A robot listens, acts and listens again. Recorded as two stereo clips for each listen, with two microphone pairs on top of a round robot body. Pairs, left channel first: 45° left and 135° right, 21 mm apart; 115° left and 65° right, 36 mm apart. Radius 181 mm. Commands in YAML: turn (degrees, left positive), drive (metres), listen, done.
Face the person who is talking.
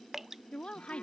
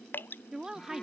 done: "Facing the woman speaking."